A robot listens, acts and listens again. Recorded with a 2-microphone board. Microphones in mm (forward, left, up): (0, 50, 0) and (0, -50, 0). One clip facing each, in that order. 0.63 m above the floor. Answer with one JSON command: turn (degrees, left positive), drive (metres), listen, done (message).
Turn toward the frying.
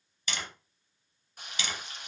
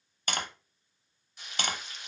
{"turn": 50}
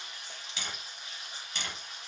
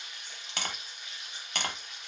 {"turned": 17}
{"turn": 35}
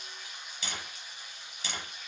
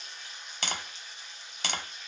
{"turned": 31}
{"done": "Facing the frying."}